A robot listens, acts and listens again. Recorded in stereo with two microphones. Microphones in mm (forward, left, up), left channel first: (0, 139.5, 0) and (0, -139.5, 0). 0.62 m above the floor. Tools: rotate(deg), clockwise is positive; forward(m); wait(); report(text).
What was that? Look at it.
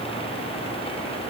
wait()
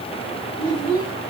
rotate(-30)
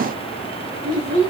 rotate(-150)
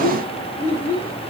rotate(-45)
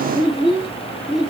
report("Facing the child speaking, over 4 m away.")